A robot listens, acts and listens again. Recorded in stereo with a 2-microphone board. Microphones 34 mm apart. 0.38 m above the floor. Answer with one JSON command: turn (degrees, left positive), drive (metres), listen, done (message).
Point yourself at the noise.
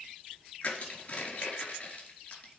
{"turn": 35}
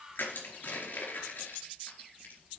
{"turn": 110}
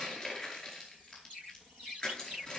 {"turn": 30}
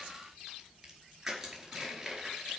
{"done": "Found it: crushing, straight ahead, over 4 m away."}